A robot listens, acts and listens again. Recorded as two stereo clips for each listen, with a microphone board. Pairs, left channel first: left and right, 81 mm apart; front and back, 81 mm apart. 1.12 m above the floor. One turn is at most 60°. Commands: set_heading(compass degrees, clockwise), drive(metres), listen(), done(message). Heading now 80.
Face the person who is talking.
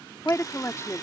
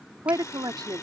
set_heading(20)
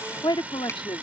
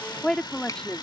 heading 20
set_heading(320)
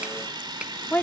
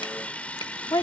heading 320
set_heading(295)
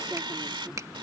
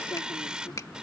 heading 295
listen()
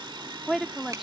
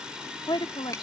done("Facing the woman speaking.")